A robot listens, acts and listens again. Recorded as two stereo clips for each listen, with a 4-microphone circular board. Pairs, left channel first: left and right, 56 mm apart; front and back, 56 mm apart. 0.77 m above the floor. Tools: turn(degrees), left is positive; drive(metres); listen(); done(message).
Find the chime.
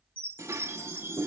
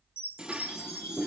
turn(degrees=-45)
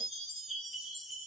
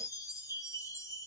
done("Found it: a chime, straight ahead, 2 to 4 m away.")